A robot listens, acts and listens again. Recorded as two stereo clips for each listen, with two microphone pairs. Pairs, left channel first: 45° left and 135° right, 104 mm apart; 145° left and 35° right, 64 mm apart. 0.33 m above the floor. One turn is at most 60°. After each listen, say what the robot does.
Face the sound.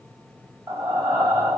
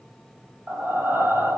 Turn 60° right.
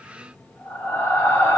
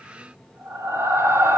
Turn 15° right.
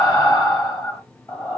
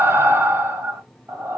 Found it: breathing, straight ahead.